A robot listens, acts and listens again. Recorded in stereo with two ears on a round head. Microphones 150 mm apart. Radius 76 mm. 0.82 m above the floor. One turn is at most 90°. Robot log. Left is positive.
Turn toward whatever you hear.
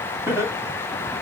note: The laughter: about 15° right or 165° right.
cmd yaw -15
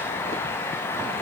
cmd idle
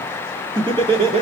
note: The laughter: about 35° right or 145° right.
cmd yaw -35
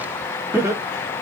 note: The laughter: about 15° right or 165° right.
cmd yaw -15
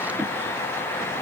cmd idle
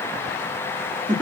note: The laughter: about 25° right or 155° right.
cmd yaw -25
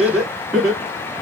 end: Facing the laughter.